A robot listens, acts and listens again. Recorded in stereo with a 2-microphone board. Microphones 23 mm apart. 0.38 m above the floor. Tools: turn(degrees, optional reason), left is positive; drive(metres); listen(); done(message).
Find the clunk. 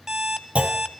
turn(degrees=-90)
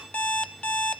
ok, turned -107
turn(degrees=15, reason="Nothing new. It was at 15° left.")
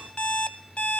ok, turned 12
done("Facing where the clunk came from. I can't hear it now.")